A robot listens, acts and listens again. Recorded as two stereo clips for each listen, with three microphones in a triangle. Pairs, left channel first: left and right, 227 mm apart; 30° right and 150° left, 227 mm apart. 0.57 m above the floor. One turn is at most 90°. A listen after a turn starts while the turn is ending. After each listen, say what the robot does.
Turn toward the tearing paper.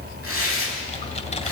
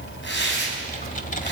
Turn 70° right.
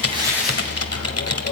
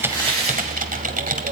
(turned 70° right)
Keep listening.
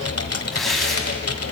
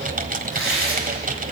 Facing the tearing paper.